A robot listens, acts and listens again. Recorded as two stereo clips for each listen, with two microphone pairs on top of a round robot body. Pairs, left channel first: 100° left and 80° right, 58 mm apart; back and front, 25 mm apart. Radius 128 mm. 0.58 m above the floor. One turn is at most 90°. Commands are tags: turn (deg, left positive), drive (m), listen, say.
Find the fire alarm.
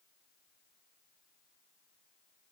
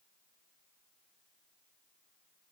<listen/>
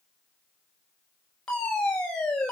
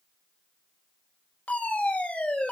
<turn deg="90"/>
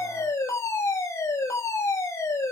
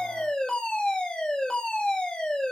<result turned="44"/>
<turn deg="90"/>
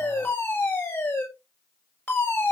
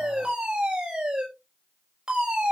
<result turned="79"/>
<turn deg="55"/>
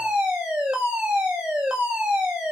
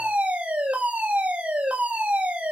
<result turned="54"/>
<say>Found it: a fire alarm, straight ahead, over 4 m away.</say>